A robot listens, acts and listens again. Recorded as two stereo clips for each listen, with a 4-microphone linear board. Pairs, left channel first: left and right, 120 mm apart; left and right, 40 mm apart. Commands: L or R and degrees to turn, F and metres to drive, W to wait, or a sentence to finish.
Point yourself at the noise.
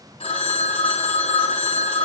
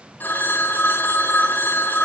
L50
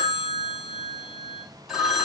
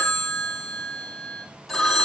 Facing the phone ringing, 2 to 4 m away.